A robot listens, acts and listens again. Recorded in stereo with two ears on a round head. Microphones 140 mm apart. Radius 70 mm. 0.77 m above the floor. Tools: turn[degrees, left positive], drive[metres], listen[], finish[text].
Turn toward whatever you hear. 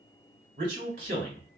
Thought: The man speaking: about 55° right or 125° right.
Action: turn[-55]
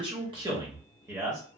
Thought: So it is at 20° right.
Action: turn[-20]
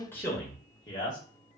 Thought: The man speaking is now 25° left.
Action: turn[25]
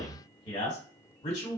Thought: The man speaking is now 30° left.
Action: turn[30]
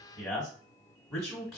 Action: finish[Found it: a man speaking, straight ahead, 1 to 2 m away.]